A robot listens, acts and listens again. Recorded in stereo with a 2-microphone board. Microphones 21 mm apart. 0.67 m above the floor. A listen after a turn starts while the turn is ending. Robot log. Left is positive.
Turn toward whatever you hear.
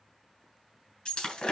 note: The breaking glass: about 50° left or 130° left.
cmd yaw +50
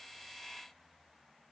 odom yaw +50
cmd idle
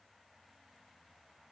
end: I heard breaking glass, but can't make it out now. It was about straight ahead or 80° left.